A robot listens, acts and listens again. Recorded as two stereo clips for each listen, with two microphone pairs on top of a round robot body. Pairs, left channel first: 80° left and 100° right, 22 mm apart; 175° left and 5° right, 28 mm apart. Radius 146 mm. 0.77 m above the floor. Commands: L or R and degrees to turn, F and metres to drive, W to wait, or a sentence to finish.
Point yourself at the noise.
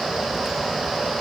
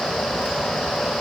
W
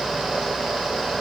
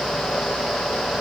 W
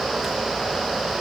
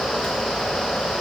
I can't make out anything.